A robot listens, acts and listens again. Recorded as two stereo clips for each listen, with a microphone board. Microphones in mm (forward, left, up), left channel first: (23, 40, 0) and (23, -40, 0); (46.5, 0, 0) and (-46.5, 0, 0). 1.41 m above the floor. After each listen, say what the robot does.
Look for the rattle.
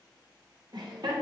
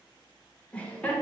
Keep listening.
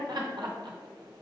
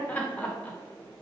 Keep listening.
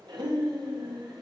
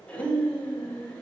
I can't make out a rattle to turn to.